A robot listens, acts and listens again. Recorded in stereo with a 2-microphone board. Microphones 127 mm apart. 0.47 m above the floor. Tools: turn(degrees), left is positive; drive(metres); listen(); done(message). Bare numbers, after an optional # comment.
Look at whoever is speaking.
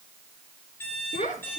turn(90)
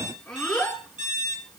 done("Found it: a child speaking, straight ahead.")